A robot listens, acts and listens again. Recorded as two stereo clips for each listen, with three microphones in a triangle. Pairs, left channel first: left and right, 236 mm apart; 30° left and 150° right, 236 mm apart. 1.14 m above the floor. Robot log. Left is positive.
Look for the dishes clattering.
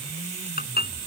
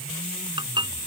note: The dishes clattering: 140° left.
cmd yaw +140
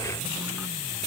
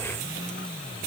cmd idle
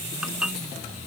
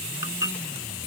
end: Found it: dishes clattering, straight ahead.